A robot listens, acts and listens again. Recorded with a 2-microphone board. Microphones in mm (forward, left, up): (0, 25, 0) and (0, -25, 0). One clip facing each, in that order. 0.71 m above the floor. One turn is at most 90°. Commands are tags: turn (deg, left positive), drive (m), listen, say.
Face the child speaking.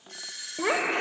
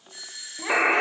<turn deg="45"/>
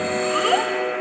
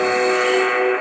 <listen/>
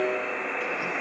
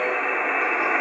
<listen/>
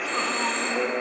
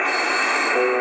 <say>I heard a child speaking, but can't make it out now. It was about straight ahead or 90° left.</say>